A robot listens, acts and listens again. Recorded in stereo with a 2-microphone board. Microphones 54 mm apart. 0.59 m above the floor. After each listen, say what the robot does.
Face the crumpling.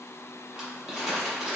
Turn 30° right.
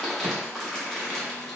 Turn 10° left.
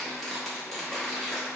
Facing the crumpling, under 1 m away.